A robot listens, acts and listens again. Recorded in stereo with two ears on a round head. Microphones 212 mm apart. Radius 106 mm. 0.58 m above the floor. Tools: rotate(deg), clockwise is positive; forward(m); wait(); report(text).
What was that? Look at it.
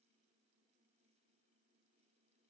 wait()
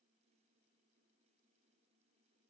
wait()
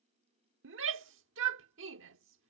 rotate(55)
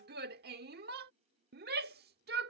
rotate(50)
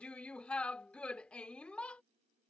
report("Facing the shout.")